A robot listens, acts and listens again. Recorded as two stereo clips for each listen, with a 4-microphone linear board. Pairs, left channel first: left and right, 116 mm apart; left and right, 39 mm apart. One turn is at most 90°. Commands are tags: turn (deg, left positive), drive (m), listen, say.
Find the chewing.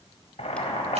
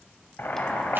<listen/>
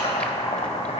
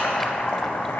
<listen/>
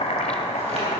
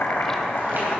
<say>I can't make out chewing, only boiling.</say>